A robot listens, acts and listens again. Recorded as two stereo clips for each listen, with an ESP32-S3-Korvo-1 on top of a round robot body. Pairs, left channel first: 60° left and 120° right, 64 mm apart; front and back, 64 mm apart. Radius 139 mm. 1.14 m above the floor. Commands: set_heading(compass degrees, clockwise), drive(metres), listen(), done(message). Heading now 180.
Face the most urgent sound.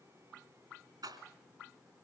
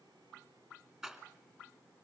listen()
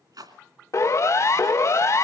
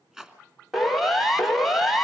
set_heading(90)
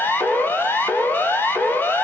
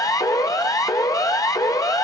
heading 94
done("Facing the siren, 2 to 4 m away.")